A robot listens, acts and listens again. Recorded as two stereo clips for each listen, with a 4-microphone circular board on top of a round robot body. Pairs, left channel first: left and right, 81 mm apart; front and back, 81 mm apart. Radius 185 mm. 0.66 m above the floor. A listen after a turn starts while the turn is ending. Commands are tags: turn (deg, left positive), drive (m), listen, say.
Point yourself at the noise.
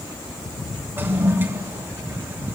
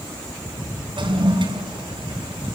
<turn deg="-155"/>
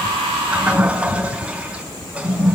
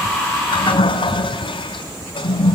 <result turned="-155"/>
<turn deg="-15"/>
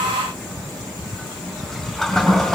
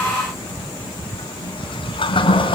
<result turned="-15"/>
<say>Found it: a toilet flushing, straight ahead, 2 to 4 m away.</say>